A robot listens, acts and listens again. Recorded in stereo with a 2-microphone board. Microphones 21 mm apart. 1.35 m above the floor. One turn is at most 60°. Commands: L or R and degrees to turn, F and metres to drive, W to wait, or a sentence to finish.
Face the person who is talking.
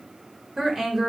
R30
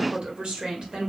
R60
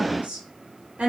R60
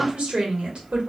R60
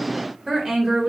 R25
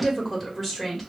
Found it: a woman speaking, straight ahead, 1 to 2 m away.